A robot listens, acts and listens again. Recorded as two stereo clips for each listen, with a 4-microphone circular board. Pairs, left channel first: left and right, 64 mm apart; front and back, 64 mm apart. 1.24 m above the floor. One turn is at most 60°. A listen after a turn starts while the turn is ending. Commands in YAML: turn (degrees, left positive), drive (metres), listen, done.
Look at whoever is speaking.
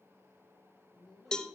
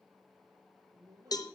turn: 60
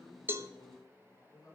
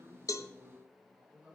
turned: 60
turn: 60
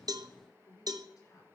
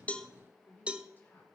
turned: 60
turn: 60
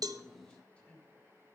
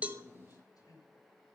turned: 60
turn: 15
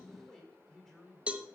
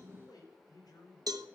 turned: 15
done: "Facing the man speaking, over 4 m away."